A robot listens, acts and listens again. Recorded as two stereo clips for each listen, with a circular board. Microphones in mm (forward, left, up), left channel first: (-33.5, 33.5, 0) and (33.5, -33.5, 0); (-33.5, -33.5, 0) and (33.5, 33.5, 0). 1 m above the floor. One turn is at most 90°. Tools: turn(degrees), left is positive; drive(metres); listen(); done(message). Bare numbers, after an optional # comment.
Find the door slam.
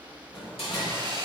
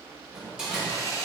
# The door slam: 130° left.
turn(90)
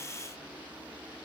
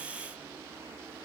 # Nothing new. It was at 40° left.
turn(40)
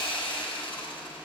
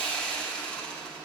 done("Facing where the door slam came from. I can't hear it now.")